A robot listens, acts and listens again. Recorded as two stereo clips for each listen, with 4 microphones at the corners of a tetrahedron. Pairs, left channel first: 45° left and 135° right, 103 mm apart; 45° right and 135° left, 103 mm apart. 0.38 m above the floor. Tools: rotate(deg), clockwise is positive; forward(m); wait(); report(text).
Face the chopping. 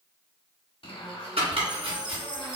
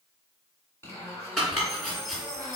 rotate(130)
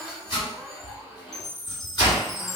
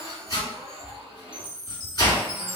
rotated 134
report("Facing the chopping, 1 to 2 m away.")